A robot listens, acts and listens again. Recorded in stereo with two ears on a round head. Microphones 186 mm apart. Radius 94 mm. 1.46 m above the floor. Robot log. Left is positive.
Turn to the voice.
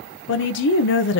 note: The woman speaking: about 60° left or 120° left.
cmd yaw +60
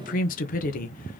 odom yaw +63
note: So it is at 45° left.
cmd yaw +45
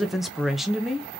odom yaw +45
end: Facing the woman speaking, under 1 m away.